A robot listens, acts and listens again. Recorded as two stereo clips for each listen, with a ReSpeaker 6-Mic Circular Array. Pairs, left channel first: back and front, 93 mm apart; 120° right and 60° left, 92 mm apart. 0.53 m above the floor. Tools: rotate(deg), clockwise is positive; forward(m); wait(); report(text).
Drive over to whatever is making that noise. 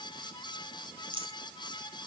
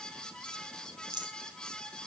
rotate(-20)
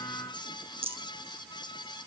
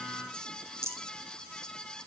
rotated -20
forward(1.0)
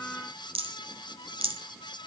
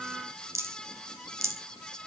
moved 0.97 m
forward(1.0)
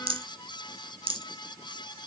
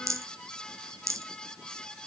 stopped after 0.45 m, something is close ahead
report("I am next to the rattle.")